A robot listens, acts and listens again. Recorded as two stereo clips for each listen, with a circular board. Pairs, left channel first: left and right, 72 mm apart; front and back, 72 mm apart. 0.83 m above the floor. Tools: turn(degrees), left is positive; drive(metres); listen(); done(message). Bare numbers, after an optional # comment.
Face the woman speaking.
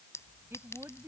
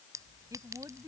# The woman speaking: 140° right.
turn(-140)
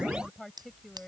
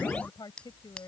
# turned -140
done("Facing the woman speaking.")